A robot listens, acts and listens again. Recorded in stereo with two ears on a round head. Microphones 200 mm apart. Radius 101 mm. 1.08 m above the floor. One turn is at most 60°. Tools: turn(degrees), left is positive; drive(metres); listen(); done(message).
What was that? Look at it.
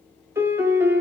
turn(degrees=-30)
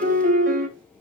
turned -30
turn(degrees=-60)
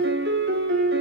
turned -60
turn(degrees=-60)
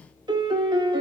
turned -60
turn(degrees=-25)
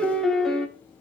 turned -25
done("Found it: a piano, straight ahead, under 1 m away.")